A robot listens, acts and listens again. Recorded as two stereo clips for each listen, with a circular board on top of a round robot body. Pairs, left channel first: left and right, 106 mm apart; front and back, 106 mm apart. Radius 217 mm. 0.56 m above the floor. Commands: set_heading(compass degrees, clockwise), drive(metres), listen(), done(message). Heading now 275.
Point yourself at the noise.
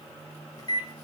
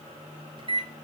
set_heading(135)
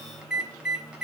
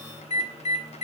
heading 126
done("Found it: a microwave, straight ahead, 2 to 4 m away.")